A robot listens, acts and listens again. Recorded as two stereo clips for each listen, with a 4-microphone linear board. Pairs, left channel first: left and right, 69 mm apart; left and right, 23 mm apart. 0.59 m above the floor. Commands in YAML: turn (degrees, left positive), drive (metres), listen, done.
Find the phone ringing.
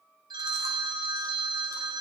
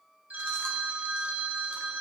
turn: -90
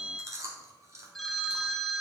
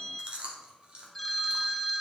done: "Found it: a phone ringing, straight ahead."